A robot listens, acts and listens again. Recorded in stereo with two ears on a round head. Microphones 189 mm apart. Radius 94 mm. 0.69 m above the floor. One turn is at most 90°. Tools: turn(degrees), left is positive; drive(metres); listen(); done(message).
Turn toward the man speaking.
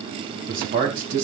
turn(degrees=-40)
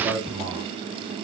done("Facing the man speaking.")